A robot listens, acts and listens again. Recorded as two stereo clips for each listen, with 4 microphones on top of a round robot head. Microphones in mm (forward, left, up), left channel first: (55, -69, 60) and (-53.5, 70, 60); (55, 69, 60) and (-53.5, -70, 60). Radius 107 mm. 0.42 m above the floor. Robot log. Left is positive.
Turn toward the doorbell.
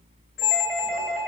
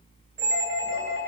note: The doorbell: 45° left.
cmd yaw +45
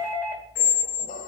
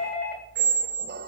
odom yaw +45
note: The doorbell is now 20° left.
cmd yaw +20
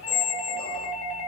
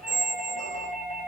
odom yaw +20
end: Facing the doorbell, 2 to 4 m away.